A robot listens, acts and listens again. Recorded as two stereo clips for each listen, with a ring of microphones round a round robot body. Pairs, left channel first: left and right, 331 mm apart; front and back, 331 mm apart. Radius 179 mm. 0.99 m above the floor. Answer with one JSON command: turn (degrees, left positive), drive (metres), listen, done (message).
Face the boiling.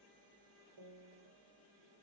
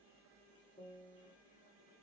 {"listen": true}
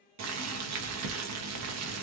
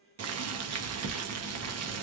{"turn": -135}
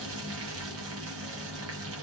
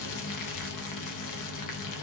{"turn": -35}
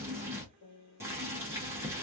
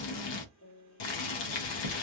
{"done": "Found it: boiling, straight ahead, under 1 m away."}